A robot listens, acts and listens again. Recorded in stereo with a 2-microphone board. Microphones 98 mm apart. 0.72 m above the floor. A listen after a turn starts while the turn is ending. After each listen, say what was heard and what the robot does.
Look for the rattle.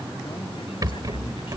The rattle: about 40° right or 140° right. Turn 40° right.
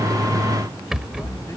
Found it: a rattle, straight ahead.